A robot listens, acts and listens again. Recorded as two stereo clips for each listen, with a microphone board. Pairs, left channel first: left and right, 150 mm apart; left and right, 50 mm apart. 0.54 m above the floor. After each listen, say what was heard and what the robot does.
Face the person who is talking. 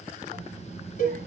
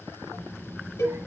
The child speaking: about 75° right or 105° right. Turn 75° right.
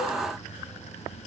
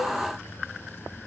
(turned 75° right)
So it is at 10° left. Turn 10° left.
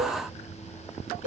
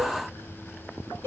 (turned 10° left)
The child speaking is now 10° left. Turn 10° left.
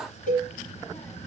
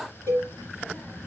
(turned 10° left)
The child speaking is now 10° left. Turn 10° left.
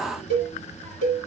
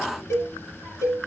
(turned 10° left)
The child speaking is now 10° left. Turn 10° left.
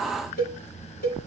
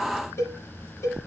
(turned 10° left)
Facing the child speaking.